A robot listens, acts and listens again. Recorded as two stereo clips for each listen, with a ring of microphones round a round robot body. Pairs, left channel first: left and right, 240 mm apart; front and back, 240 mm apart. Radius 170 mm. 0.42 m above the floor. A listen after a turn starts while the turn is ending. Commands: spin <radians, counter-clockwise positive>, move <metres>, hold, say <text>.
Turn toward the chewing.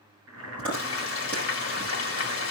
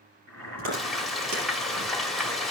spin 3.05
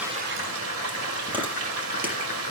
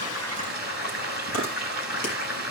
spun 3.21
say Facing the chewing.